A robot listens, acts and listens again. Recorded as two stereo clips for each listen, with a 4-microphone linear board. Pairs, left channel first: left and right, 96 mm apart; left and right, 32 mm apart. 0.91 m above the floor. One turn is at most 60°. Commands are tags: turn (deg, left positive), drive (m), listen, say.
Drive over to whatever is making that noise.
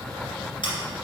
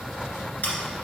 <turn deg="60"/>
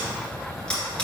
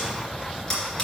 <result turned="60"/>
<turn deg="10"/>
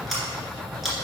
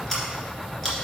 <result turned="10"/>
<drive m="1.0"/>
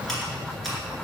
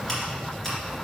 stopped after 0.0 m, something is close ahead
<say>Blocked. The scissors is further on, straight ahead.</say>